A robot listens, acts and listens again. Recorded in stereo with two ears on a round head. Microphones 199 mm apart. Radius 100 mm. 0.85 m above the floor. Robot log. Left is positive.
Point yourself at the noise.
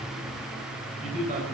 note: The man speaking: about 35° right or 145° right.
cmd yaw -35
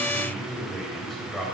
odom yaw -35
end: Facing the man speaking, 2 to 4 m away.